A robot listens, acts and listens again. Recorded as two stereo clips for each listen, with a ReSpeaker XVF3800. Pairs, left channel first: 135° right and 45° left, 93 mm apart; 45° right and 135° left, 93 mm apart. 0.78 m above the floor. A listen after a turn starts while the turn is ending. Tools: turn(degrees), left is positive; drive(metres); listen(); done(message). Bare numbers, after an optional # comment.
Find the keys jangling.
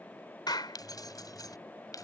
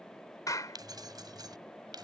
# The keys jangling: 175° left.
turn(175)
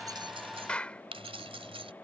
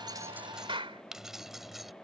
# The keys jangling is now 45° left.
turn(45)
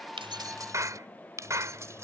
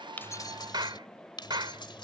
# The keys jangling is now 15° right.
turn(-15)
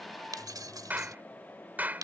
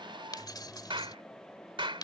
done("Found it: keys jangling, straight ahead.")